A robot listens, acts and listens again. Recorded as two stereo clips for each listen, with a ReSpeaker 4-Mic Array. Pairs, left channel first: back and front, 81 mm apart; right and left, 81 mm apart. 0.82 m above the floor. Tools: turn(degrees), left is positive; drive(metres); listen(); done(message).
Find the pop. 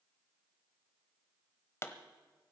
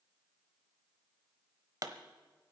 turn(degrees=130)
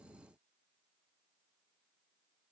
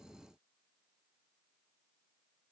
done("I heard a pop from this way, but can't make it out now.")